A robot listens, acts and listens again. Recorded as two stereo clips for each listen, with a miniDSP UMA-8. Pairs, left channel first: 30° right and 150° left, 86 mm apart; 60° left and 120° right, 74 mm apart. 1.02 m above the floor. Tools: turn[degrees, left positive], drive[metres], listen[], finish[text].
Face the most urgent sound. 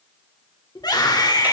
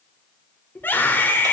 Action: finish[Facing the scream, 2 to 4 m away.]